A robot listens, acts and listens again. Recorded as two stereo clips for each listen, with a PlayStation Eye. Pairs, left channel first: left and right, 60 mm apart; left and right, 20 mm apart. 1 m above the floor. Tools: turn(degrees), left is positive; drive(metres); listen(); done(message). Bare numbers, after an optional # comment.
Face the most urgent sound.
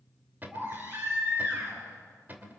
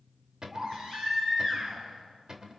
# The baby crying: about 35° right or 145° right.
turn(-35)
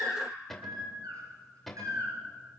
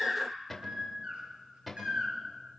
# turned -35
# So it is at 110° right.
turn(-110)
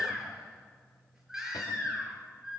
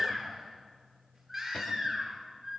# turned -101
# The baby crying is now 10° right.
turn(-10)
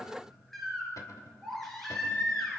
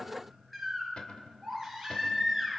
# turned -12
done("Facing the baby crying.")